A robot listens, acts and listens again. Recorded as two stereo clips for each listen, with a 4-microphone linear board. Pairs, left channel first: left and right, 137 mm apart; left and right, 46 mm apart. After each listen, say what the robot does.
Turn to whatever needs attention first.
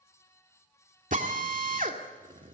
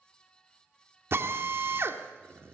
Keep listening.
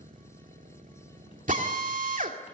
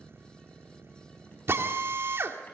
Keep listening.
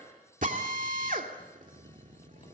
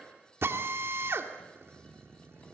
I can't make out anything urgent, only a drill.